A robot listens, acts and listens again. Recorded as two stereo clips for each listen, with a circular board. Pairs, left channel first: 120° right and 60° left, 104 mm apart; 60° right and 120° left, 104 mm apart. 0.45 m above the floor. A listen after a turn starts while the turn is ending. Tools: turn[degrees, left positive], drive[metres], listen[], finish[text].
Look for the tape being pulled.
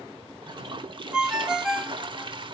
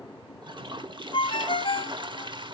Action: listen[]
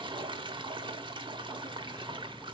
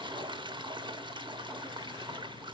Action: listen[]
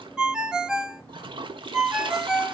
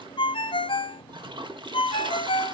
Action: finish[I can't make out tape being pulled, only a toilet flushing and a ringtone.]